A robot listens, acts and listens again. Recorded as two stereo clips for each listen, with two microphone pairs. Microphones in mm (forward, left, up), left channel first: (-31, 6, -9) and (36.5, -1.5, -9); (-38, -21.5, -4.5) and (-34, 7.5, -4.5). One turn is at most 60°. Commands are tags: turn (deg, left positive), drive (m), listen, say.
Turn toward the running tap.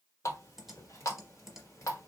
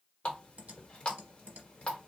<turn deg="-60"/>
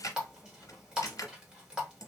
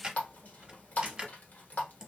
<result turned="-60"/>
<turn deg="-60"/>
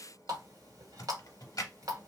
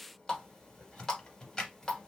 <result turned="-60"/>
<turn deg="-25"/>
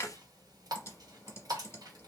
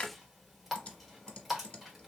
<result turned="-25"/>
<say>Facing the running tap.</say>